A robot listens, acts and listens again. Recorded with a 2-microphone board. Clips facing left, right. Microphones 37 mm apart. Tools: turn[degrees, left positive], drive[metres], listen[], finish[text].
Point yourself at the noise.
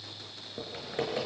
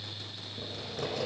Thought: The typing on a keyboard: about 35° left or 145° left.
Action: turn[35]
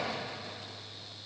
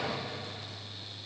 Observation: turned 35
Action: listen[]
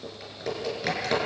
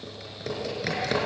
Action: finish[Found it: typing on a keyboard, straight ahead, over 4 m away.]